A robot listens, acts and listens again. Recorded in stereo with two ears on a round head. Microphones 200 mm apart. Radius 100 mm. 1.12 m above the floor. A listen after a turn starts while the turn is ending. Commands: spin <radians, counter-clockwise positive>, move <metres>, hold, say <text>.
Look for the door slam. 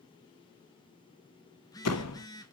spin 1.57
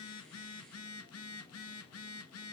say I heard a door slam from this way, but can't make it out now.